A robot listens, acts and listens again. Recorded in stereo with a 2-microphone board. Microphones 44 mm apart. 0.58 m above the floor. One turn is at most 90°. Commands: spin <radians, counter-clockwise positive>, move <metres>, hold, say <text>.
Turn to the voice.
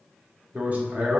spin -0.70
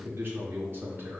spin -1.57
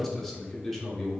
say Facing the man speaking, 1 to 2 m away.